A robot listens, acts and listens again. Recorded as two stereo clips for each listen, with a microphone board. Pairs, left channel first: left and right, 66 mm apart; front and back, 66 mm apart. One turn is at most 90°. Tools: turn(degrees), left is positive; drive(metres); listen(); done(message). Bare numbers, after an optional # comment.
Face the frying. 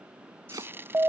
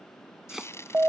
# The frying: 40° right.
turn(-40)
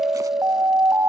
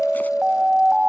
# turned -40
listen()
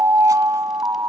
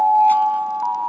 listen()
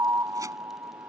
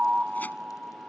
done("Facing where the frying came from. I can't hear it now.")